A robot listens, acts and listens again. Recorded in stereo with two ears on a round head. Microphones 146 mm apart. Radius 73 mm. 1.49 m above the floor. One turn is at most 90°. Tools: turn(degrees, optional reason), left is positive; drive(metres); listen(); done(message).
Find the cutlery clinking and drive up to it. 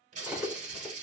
turn(degrees=-30)
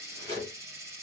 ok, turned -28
turn(degrees=-90, reason="So it is at 145° right.")
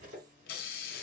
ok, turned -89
turn(degrees=-60, reason="The cutlery clinking is now 60° right.")
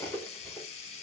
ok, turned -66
turn(degrees=10, reason="The cutlery clinking is now 10° left.")
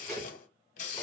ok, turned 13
drive(metres=1.0)
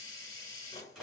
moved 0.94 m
drive(metres=1.0)
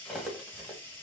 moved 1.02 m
drive(metres=1.0)
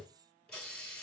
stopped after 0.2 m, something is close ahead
listen()
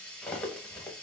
done("Arrived at the cutlery clinking, straight ahead.")